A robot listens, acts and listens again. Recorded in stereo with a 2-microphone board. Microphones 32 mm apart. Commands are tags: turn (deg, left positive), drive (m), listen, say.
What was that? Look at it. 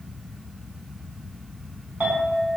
<turn deg="-75"/>
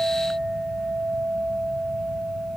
<turn deg="-10"/>
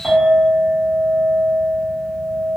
<say>Facing the clink, 1 to 2 m away.</say>